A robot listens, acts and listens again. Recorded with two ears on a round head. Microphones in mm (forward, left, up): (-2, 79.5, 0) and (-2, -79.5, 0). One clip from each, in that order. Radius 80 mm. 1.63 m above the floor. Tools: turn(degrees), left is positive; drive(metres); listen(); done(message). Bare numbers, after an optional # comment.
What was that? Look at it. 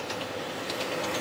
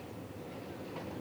listen()
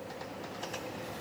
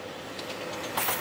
listen()
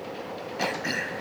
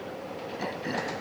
# The throat clearing: about 65° left or 115° left.
turn(65)
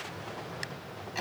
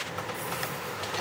done("Facing the throat clearing.")